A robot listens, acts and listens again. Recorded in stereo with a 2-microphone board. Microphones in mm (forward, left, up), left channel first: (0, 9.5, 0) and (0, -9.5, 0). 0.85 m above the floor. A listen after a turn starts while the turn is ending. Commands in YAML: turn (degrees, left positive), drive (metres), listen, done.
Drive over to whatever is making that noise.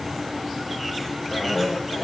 turn: 50
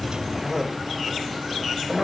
drive: 1.0
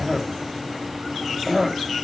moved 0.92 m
drive: 1.0
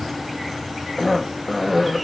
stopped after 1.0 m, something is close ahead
done: "Arrived at the cough, straight ahead."